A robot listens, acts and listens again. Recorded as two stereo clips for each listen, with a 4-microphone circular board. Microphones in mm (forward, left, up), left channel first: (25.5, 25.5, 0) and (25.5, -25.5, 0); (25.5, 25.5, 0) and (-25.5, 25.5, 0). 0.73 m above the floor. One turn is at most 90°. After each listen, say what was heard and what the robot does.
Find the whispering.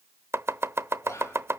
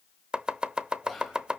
The whispering: 90° left. Turn 90° left.
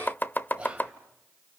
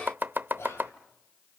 The whispering is now 25° right. Turn 25° right.
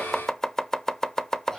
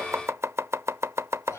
The whispering is now 10° left. Turn 10° left.
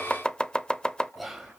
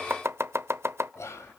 Facing the whispering.